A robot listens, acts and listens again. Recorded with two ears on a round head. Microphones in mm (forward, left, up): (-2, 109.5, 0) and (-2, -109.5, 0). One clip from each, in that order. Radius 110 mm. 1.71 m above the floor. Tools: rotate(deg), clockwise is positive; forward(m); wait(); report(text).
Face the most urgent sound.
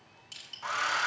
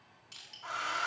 wait()
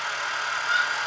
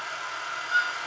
rotate(-25)
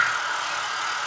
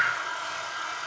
report("Facing the scream, 1 to 2 m away.")